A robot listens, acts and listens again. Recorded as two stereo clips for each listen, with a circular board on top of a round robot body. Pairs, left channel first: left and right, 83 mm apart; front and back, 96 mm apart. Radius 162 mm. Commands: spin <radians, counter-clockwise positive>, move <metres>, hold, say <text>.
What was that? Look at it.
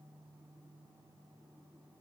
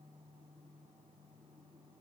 hold
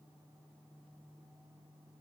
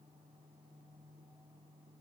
hold
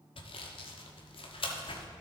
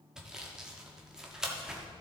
spin 1.66
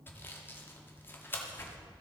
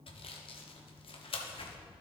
spin 0.44
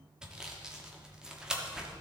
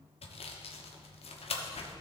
say Facing the sawing.